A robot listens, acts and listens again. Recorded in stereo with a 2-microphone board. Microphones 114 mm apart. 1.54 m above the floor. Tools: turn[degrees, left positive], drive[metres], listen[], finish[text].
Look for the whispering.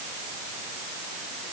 Action: listen[]
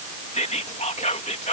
Action: turn[90]
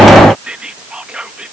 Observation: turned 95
Thought: So it is at 10° right.
Action: turn[-10]
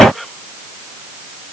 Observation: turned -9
Action: finish[Found it: whispering, straight ahead.]